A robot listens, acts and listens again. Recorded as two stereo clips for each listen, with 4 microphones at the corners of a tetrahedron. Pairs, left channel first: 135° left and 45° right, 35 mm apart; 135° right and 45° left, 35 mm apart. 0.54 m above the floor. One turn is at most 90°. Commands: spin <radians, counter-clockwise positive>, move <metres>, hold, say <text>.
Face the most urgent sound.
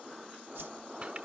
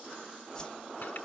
hold
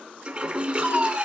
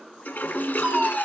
spin -0.44
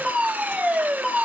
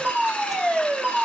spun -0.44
say Facing the fire alarm, 2 to 4 m away.